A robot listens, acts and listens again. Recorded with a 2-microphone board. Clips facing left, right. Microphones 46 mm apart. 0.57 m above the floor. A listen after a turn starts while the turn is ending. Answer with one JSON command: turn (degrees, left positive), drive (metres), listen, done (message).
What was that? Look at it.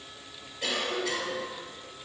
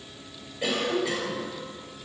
{"turn": -20}
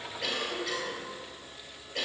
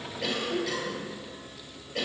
{"done": "Facing the cough."}